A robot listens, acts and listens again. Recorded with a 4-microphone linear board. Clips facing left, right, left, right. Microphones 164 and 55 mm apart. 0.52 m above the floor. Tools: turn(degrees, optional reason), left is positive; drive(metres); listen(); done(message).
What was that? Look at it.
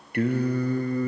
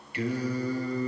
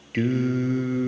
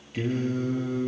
turn(degrees=50, reason="The singing: about 50° left or 130° left.")
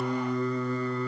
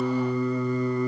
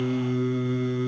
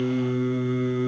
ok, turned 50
turn(degrees=-15, reason="So it is at 15° right.")
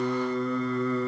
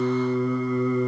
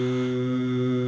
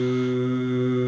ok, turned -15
turn(degrees=-15, reason="The singing is now 15° right.")
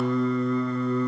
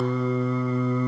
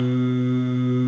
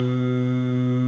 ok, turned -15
turn(degrees=-10, reason="The singing is now 10° right.")
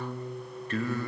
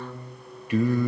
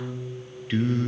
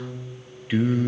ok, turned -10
turn(degrees=-15, reason="The singing is now 15° right.")
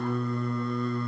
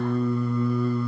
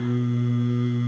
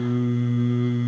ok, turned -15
done("Found it: singing, straight ahead.")